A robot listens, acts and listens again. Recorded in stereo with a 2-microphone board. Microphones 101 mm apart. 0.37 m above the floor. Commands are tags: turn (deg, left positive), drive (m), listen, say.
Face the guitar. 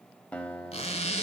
<turn deg="30"/>
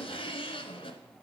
<listen/>
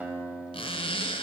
<turn deg="-15"/>
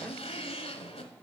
<listen/>
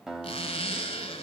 <say>Facing the guitar, under 1 m away.</say>